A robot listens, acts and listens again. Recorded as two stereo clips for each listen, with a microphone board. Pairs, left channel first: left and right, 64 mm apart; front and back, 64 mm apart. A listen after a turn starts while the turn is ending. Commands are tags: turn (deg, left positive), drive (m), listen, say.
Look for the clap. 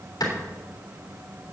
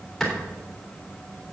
<turn deg="85"/>
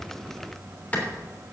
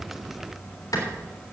<turn deg="25"/>
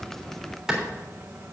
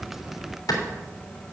<say>Facing the clap.</say>